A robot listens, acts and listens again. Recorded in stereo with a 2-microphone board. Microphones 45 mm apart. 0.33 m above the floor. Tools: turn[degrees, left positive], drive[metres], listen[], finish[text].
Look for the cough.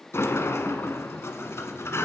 Action: listen[]
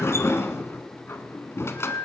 Action: listen[]
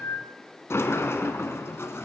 Action: finish[I can't make out a cough, only a sliding door.]